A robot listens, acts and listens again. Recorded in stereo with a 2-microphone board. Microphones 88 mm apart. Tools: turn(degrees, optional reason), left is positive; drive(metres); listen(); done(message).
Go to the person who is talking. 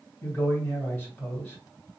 turn(degrees=20, reason="The man speaking: about 20° left or 160° left.")
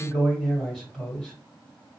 drive(metres=1.0)
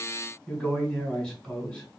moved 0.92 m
drive(metres=1.0)
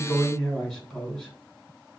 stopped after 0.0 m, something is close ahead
done("Arrived at the man speaking, straight ahead.")